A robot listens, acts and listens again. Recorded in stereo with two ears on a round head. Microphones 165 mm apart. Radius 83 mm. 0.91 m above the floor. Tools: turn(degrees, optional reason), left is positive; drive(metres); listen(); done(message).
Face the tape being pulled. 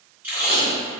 turn(degrees=-30)
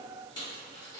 listen()
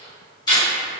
turn(degrees=25, reason="So it is at 25° left.")
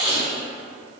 done("Facing the tape being pulled, 1 to 2 m away.")